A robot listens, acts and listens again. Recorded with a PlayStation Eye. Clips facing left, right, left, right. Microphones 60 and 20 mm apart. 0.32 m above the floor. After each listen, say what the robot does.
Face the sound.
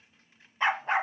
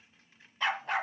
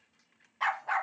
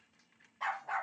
Turn 30° left.
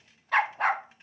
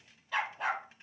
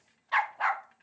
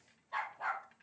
Turn 115° left.
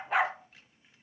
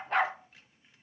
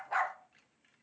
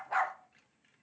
Found it: a dog barking, straight ahead, under 1 m away.